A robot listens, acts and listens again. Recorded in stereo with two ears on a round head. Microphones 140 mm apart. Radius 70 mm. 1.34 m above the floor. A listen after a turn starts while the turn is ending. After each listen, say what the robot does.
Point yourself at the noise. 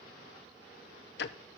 Turn 75° left.
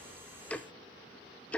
Turn 10° left.
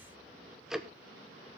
Facing the ticking.